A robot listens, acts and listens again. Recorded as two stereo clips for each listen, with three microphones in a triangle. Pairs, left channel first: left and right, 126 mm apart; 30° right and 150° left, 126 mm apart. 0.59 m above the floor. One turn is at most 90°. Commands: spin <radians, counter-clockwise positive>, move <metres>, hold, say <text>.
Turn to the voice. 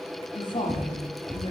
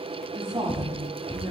spin 1.57
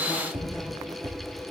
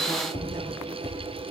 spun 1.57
spin 0.17
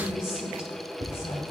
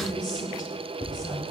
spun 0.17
spin 0.44
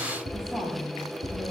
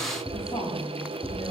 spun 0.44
say Found it: a woman speaking, straight ahead, over 4 m away.